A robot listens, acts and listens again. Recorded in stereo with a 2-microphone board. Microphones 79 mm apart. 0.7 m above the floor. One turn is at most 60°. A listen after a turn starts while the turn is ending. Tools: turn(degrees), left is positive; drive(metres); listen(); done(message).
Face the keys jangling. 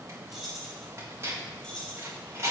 turn(degrees=30)
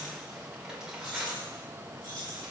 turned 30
turn(degrees=60)
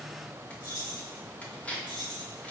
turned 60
turn(degrees=55)
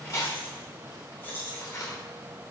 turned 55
turn(degrees=25)
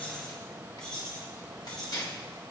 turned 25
turn(degrees=10)
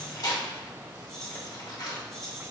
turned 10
done("Found it: keys jangling, straight ahead.")